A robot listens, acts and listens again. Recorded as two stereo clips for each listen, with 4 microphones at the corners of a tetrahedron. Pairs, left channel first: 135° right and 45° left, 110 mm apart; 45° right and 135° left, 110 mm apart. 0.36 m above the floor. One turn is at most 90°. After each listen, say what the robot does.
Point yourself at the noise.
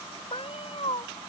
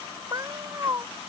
Turn 90° right.
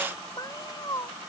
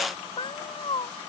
Turn 80° right.
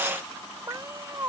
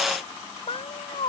Turn 15° right.
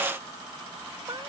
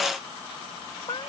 Found it: a cat meowing, straight ahead.